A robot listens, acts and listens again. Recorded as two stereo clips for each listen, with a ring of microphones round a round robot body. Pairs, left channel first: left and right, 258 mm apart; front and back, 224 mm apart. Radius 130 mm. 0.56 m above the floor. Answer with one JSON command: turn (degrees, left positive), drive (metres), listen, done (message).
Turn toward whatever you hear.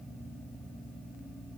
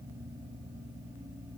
{"listen": true}
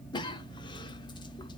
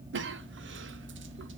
{"turn": 160}
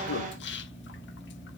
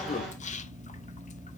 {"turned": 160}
{"turn": 50}
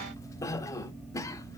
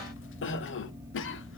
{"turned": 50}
{"turn": 15}
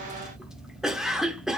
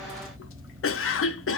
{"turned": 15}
{"done": "Facing the cough, 1 to 2 m away."}